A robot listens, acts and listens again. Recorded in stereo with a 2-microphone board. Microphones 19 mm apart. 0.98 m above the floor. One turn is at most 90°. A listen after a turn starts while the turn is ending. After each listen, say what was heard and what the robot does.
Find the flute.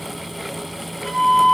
Turn 30° left.
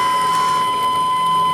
So it is at 15° right. Turn 15° right.
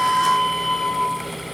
Facing the flute.